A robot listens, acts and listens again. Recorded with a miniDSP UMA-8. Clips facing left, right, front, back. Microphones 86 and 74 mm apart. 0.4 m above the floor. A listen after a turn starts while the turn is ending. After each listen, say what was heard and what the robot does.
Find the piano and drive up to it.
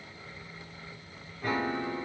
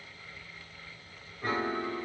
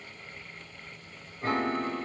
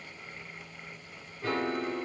The piano: 40° right. Turn 40° right.
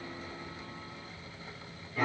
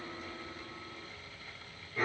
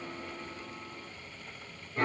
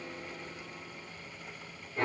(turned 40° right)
Drive 1.0 m forward.
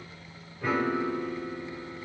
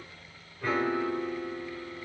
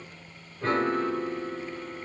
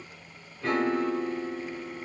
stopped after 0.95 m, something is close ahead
The piano is now 10° left. Turn 10° left.
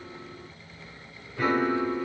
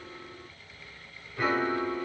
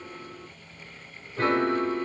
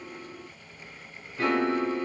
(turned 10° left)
Arrived at the piano, straight ahead.